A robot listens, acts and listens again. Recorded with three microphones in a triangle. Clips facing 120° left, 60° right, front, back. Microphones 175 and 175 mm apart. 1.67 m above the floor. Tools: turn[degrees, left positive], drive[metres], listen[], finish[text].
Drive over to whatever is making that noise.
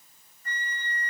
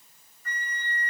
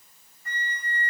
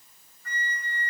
Thought: The flute: 65° left.
Action: turn[65]
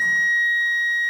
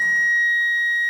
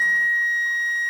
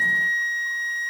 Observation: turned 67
Action: drive[1.0]
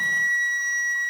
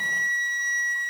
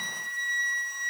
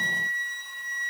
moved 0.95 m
Action: drive[1.0]
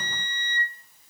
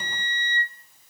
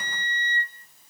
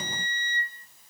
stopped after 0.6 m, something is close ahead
Thought: The flute is now 10° left.
Action: turn[10]
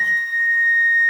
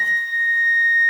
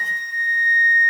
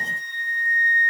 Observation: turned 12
Action: finish[Arrived at the flute, straight ahead.]